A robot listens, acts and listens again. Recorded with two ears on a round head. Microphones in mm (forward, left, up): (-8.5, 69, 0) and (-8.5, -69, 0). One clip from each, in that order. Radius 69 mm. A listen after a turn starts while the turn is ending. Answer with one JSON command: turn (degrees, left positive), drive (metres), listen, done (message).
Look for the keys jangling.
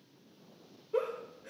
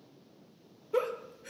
{"listen": true}
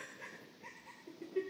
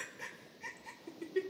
{"listen": true}
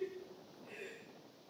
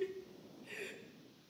{"done": "I can't make out keys jangling to turn to."}